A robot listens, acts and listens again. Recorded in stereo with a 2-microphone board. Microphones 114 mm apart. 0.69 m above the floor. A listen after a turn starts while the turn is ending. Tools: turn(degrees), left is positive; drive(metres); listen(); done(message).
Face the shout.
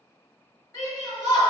turn(degrees=30)
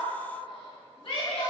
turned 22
turn(degrees=125)
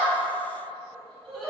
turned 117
turn(degrees=10)
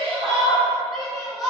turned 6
done("Facing the shout.")